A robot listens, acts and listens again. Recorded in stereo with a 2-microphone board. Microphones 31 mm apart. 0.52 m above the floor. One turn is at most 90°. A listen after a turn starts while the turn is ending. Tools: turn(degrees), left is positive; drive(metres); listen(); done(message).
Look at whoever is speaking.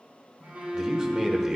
turn(degrees=-20)
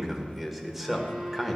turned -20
done("Facing the man speaking.")